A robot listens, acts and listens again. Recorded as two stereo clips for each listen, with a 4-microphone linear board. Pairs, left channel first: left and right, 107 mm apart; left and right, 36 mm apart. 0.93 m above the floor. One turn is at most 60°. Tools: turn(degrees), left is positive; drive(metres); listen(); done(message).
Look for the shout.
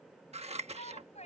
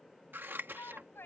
turn(degrees=60)
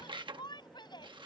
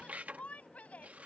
turn(degrees=40)
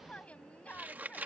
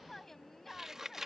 turn(degrees=10)
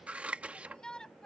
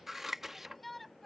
done("Facing the shout.")